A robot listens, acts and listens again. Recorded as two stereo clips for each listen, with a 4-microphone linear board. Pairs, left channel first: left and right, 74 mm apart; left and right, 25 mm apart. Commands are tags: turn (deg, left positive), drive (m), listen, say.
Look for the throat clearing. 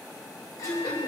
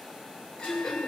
<turn deg="50"/>
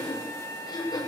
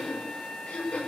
<turn deg="80"/>
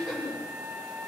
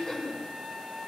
<say>Found it: throat clearing, straight ahead, over 4 m away.</say>